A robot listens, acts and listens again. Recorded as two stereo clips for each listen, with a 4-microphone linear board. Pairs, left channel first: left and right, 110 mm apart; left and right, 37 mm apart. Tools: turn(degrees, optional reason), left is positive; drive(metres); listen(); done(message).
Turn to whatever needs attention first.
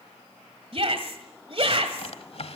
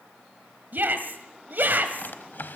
turn(degrees=-60, reason="The shout: about 60° right or 120° right.")
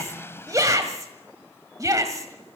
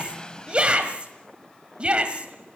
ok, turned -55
turn(degrees=-35, reason="So it is at 35° right.")
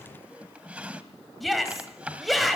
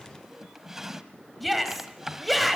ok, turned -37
done("Found it: a shout, straight ahead.")